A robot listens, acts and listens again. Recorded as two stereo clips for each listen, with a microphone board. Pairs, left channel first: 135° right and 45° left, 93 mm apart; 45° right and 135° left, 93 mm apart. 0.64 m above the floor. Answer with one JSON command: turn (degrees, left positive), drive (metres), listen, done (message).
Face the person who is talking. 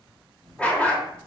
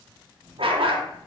{"turn": -100}
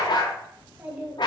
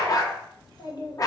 {"turn": -30}
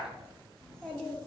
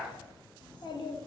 {"turn": -60}
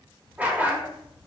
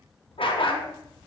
{"turn": -30}
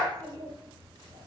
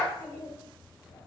{"turn": 10}
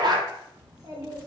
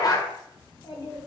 {"done": "Facing the child speaking."}